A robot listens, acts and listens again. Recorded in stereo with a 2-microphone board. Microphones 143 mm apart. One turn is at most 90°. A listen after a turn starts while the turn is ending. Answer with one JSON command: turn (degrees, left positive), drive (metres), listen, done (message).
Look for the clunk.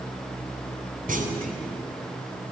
{"turn": -70}
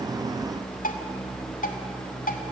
{"listen": true}
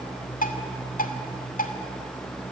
{"done": "I heard a clunk, but can't make it out now. It was about straight ahead or 40° right."}